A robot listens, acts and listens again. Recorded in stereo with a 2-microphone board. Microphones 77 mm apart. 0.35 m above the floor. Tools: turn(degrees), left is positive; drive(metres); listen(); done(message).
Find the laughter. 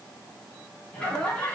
turn(degrees=15)
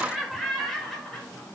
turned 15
turn(degrees=30)
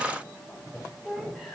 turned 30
turn(degrees=30)
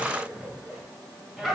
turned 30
turn(degrees=30)
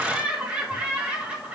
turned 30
turn(degrees=-15)
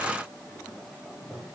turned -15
done("Facing the laughter, 1 to 2 m away.")